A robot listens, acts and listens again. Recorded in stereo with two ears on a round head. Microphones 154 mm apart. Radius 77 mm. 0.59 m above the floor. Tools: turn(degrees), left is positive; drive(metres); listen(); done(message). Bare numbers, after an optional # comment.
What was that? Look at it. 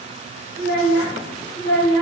# The child speaking: about 65° left or 115° left.
turn(65)
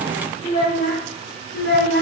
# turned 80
# So it is at 65° left.
turn(65)
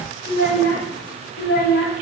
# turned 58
# The child speaking is now 60° left.
turn(60)
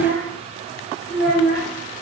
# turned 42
# The child speaking is now 35° left.
turn(35)
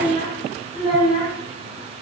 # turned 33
done("Found it: a child speaking, straight ahead.")